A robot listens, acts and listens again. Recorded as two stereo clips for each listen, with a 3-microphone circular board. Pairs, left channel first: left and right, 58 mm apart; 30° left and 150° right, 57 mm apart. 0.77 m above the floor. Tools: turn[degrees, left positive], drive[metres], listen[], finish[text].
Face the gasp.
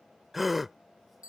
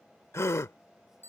Action: finish[Found it: a gasp, straight ahead.]